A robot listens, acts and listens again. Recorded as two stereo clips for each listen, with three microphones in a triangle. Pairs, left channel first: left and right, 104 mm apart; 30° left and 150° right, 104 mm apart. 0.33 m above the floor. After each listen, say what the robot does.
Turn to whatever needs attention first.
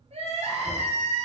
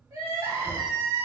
Turn 90° right.
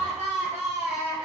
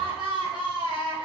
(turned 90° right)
Turn 15° right.
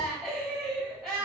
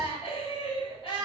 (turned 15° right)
Facing the crying, 1 to 2 m away.